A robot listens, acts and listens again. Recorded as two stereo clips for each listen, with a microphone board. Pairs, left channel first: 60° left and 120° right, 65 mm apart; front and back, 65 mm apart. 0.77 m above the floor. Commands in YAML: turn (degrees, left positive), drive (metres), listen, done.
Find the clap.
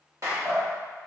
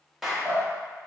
turn: -95
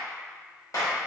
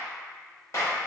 turn: 35
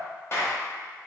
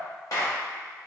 turn: 20
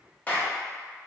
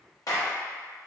done: "Facing the clap."